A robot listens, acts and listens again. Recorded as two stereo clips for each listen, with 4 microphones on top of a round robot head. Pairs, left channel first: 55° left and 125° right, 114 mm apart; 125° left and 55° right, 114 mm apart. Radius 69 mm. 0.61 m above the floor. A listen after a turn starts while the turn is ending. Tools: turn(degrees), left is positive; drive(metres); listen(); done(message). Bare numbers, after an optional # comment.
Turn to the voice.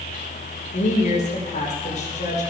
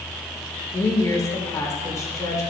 # The woman speaking: 65° left.
turn(65)
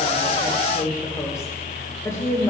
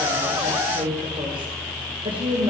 # The woman speaking is now 10° right.
turn(-10)
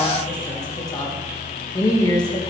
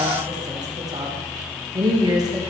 done("Facing the woman speaking, 2 to 4 m away.")